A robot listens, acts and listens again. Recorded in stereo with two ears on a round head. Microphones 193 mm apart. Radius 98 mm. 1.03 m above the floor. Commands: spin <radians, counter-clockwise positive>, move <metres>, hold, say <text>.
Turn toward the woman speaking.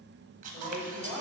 spin -0.52
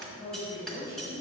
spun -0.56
spin 0.35
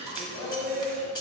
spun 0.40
say Facing the woman speaking.